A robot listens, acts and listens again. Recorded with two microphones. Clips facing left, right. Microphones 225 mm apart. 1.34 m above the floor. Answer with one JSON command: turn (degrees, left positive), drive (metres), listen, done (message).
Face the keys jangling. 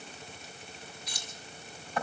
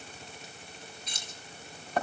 {"turn": -25}
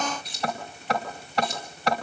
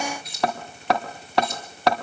{"done": "Facing the keys jangling, over 4 m away."}